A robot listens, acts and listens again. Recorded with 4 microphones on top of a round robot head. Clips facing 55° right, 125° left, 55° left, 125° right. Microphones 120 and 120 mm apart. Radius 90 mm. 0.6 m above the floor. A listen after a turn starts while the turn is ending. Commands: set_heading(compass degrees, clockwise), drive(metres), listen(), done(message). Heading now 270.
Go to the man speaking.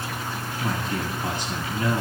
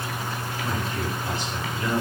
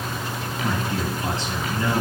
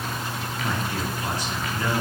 set_heading(280)
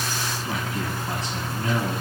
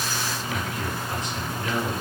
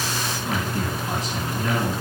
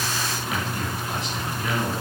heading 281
drive(1.0)
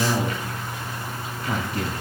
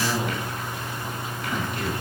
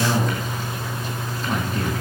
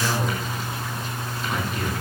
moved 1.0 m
drive(1.0)
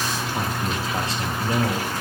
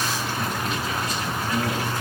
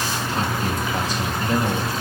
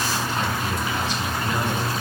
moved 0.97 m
drive(1.0)
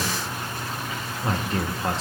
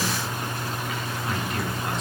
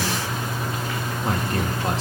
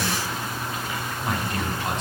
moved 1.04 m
drive(1.0)
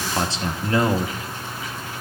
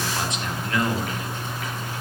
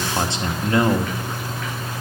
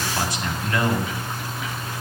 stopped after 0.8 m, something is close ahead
done("Arrived at the man speaking, straight ahead.")